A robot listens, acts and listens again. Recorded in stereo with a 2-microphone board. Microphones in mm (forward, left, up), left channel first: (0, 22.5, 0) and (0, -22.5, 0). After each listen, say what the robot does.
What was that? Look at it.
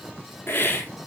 Turn 60° left.
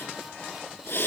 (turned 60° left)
Turn 55° left.
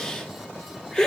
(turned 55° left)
Turn 15° left.
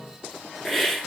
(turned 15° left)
Found it: a hiss, straight ahead.